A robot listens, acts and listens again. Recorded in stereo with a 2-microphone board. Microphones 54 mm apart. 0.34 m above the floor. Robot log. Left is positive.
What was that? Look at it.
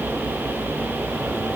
cmd idle
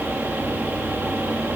cmd idle
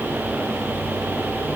end: I can't make out anything.